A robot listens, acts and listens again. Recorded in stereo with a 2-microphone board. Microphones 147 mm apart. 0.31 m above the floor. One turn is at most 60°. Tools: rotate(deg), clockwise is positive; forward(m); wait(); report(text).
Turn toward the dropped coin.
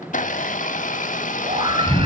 wait()
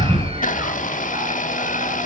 wait()
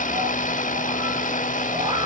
report("I can't make out a dropped coin, only a blender and a scream.")